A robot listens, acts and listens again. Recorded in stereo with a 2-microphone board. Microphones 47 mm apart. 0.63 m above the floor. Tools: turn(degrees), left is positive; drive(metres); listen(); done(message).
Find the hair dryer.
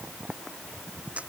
listen()
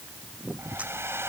turn(degrees=-75)
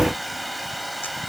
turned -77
done("Facing the hair dryer.")